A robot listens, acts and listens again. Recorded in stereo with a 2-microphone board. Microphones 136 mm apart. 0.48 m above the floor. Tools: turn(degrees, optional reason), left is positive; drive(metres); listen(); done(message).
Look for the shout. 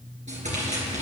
listen()
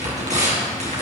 listen()
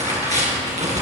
done("I can't make out a shout to turn to.")